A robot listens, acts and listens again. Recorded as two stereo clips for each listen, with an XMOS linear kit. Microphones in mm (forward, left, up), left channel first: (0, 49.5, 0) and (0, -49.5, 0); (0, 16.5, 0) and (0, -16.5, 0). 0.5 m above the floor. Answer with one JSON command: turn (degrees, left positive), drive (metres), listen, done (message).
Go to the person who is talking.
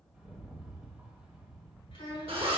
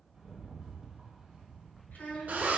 {"turn": 65}
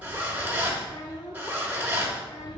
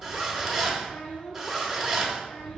{"turn": 35}
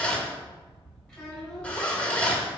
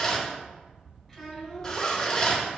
{"drive": 1.0}
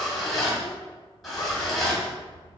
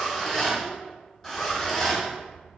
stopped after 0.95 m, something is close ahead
{"listen": true}
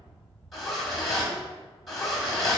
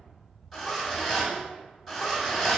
{"listen": true}
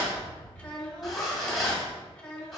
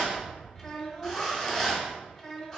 {"turn": 15}
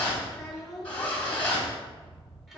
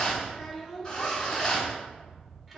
{"done": "I am next to the child speaking."}